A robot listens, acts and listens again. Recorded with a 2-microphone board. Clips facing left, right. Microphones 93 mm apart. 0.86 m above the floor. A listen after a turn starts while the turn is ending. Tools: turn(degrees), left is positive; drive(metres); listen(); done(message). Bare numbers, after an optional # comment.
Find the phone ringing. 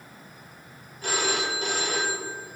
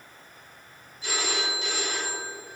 # The phone ringing: about 50° left or 130° left.
turn(50)
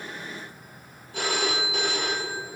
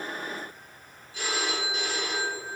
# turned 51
# So it is at 75° left.
turn(75)
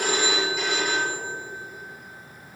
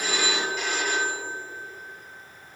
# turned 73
done("Facing the phone ringing.")